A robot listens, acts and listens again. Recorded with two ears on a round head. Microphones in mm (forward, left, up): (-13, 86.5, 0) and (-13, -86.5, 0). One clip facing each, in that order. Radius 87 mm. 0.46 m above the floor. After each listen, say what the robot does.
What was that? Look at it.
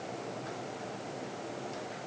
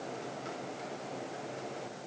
Keep listening.
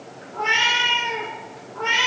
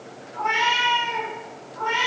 Turn 90° left.
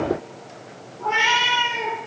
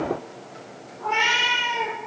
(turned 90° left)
Turn 10° left.
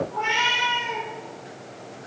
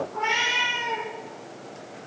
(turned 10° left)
Facing the cat meowing, over 4 m away.